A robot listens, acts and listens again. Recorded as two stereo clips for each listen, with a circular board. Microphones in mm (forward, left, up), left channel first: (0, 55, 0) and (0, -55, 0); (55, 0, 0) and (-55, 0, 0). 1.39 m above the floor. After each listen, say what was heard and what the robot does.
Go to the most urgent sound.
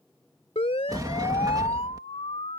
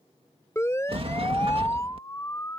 The siren: 65° left. Turn 65° left.
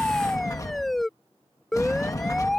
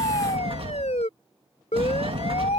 Drive 1.0 m forward.
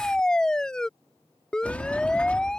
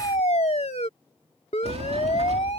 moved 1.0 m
Drive 1.0 m forward.
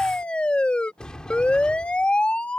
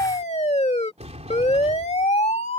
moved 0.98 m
The siren is now 10° left. Turn 10° left.
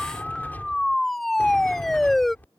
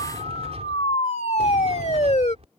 Drive 1.0 m forward.
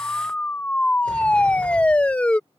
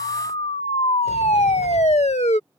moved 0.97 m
The siren is now 10° left. Turn 10° left.
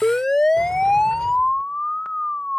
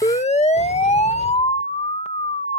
Drive 1.0 m forward.
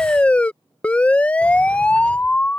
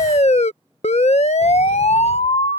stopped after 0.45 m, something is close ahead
The siren is now 10° left. Turn 10° left.
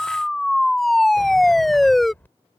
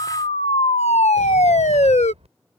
I am next to the siren.